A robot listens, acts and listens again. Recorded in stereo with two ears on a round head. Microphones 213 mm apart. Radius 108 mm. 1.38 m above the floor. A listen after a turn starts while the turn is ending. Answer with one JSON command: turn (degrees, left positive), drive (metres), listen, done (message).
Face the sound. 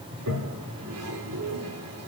{"turn": -90}
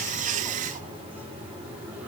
{"listen": true}
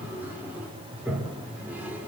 {"turn": -10}
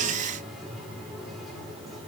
{"listen": true}
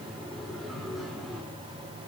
{"done": "Found it: a toilet flushing, straight ahead."}